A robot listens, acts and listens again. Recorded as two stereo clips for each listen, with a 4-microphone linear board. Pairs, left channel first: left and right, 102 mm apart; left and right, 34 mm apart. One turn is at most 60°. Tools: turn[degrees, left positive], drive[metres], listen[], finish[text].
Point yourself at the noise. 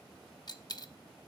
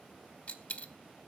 Thought: The dropped coin: about 40° left or 140° left.
Action: turn[40]
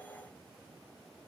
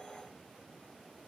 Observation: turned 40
Action: listen[]
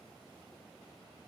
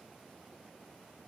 Action: finish[I heard a dropped coin, but can't make it out now. It was about straight ahead or 100° left.]